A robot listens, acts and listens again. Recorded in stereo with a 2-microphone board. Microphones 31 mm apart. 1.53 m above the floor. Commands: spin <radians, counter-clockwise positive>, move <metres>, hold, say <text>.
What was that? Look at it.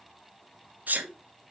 spin -1.22
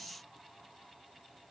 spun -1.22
hold
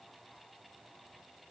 say I heard a sneeze, but can't make it out now. It was about straight ahead or 40° right.